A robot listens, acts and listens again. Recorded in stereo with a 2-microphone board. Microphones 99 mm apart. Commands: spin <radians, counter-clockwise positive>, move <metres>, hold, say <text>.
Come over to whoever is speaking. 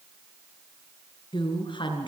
spin 0.96
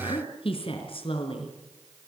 spin 1.22
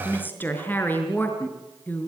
spin 0.35
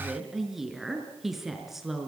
move 1.0
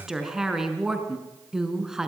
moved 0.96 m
move 1.0
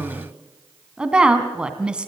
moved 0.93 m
spin -0.17
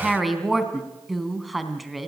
move 1.0
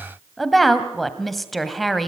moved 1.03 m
move 1.0
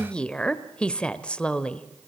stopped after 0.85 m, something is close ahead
spin 0.26
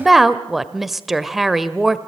say Arrived at the woman speaking, straight ahead.